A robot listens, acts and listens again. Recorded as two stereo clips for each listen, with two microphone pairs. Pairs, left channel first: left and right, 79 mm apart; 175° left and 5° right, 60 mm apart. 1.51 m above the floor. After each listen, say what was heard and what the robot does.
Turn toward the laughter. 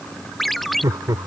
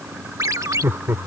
The laughter: 55° right. Turn 55° right.
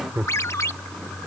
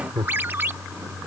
The laughter is now 10° right. Turn 10° right.
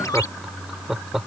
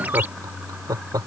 Facing the laughter.